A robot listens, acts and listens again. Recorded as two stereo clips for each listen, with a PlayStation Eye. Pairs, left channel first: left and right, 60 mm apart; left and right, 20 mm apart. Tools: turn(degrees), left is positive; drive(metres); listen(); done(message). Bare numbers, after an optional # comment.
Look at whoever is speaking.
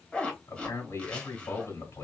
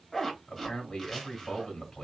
# The man speaking: about 55° left or 125° left.
turn(55)
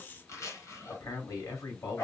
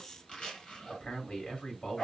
# So it is at 65° left.
turn(65)
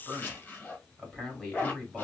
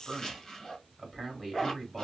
done("Facing the man speaking.")